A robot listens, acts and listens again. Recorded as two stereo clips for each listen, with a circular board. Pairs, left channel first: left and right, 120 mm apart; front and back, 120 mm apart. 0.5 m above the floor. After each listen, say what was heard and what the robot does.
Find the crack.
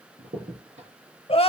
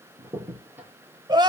The crack: 105° right. Turn 105° right.
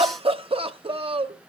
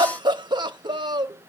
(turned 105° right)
Facing where the crack came from. I can't hear it now.